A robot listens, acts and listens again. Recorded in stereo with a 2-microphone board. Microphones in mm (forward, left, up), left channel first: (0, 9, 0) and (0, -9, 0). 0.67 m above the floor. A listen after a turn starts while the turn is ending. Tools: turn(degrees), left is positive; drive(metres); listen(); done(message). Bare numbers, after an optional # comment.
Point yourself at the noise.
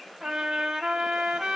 # The trumpet: about 65° right or 115° right.
turn(-65)
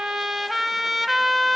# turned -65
# So it is at 15° right.
turn(-15)
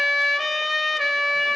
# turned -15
done("Facing the trumpet.")